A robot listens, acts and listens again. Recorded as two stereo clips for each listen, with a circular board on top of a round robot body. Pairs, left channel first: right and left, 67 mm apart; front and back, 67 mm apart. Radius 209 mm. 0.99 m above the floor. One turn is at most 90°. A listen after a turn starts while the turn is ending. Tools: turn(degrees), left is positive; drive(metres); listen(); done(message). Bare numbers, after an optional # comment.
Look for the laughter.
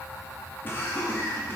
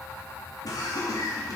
# The laughter: 30° right.
turn(-30)
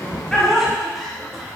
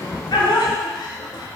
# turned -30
done("Facing the laughter.")